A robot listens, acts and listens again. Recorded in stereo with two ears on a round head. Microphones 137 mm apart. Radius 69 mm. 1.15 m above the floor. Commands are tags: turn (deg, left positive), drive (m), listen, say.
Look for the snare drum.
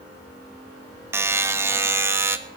<listen/>
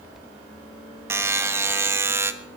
<listen/>
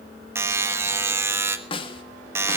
<turn deg="35"/>
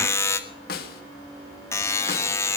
<turn deg="110"/>
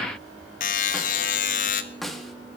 <say>Found it: a snare drum, straight ahead, 1 to 2 m away.</say>